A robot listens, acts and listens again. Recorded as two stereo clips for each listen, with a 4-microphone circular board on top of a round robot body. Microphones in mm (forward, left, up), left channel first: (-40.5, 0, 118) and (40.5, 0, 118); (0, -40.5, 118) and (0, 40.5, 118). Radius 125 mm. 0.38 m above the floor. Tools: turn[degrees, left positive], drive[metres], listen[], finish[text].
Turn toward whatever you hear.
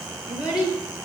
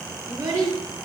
Thought: The child speaking: 140° left.
Action: turn[140]
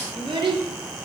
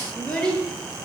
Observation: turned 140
Thought: The child speaking is now 15° right.
Action: turn[-15]
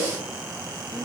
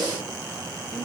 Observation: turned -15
Action: listen[]
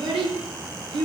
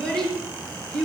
Action: finish[Found it: a child speaking, straight ahead.]